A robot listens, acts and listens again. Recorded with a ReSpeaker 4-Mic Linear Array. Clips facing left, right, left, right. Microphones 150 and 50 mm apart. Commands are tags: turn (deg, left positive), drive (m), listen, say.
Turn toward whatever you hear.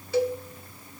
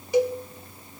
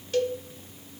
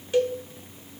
<turn deg="-15"/>
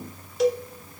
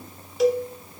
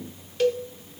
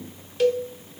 <say>Facing the cowbell, under 1 m away.</say>